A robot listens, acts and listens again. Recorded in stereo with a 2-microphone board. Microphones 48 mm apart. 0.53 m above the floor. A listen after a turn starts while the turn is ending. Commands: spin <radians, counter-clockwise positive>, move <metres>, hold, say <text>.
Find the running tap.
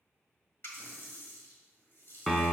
spin 0.87
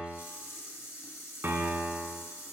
spin 1.31
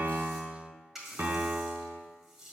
say Facing the running tap, 1 to 2 m away.